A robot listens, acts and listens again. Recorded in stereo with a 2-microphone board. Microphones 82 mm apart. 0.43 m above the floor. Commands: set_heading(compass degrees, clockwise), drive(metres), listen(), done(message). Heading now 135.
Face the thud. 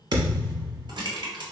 set_heading(195)
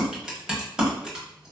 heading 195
listen()
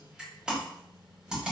done("I heard a thud, but can't make it out now. It was about straight ahead or 60° right.")